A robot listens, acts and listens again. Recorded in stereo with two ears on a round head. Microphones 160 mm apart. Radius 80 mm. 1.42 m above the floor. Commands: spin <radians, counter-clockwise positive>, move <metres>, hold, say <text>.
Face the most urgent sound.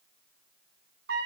hold
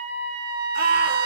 spin -0.96
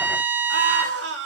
spin -1.22
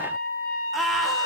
say Facing the scream.